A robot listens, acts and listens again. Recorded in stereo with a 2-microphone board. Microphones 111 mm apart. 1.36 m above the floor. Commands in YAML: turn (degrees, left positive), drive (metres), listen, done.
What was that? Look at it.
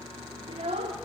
turn: -65
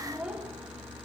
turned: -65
done: "Found it: a child speaking, straight ahead."